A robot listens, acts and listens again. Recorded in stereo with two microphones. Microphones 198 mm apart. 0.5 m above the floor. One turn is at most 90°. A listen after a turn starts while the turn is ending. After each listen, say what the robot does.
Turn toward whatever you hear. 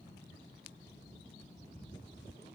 Keep listening.
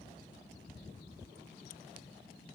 Keep listening.
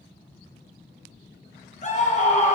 Turn 40° left.
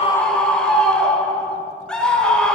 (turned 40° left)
Found it: a scream, straight ahead.